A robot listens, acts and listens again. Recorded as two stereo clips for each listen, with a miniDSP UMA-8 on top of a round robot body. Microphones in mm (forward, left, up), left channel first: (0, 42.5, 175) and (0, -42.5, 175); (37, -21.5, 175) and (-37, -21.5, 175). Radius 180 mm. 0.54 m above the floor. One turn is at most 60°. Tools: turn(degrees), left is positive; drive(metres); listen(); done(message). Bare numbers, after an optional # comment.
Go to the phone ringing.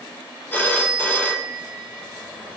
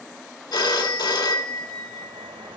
# The phone ringing: 20° left.
turn(20)
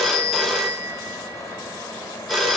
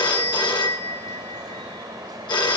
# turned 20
drive(1.0)
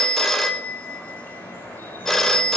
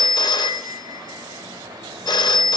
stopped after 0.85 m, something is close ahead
done("I am next to the phone ringing.")